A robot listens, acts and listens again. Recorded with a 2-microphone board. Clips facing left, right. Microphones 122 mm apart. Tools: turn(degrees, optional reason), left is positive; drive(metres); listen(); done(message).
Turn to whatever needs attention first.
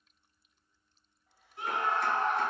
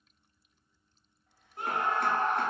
turn(degrees=-50, reason="The scream: about 50° right or 130° right.")
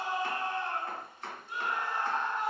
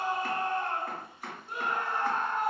turn(degrees=-70, reason="So it is at 70° right.")
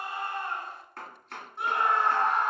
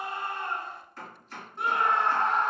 done("Facing the scream, 1 to 2 m away.")